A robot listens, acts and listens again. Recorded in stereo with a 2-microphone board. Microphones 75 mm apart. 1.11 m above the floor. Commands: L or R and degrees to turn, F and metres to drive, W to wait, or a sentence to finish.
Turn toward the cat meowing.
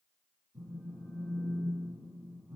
W
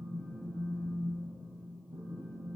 W
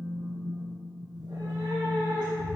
R70
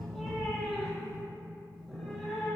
Found it: a cat meowing, straight ahead.